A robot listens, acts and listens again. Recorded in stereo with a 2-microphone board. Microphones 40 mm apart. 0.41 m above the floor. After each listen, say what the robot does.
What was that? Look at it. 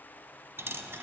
Turn 90° right.
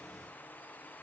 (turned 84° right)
Facing where the dropped coin came from. I can't hear it now.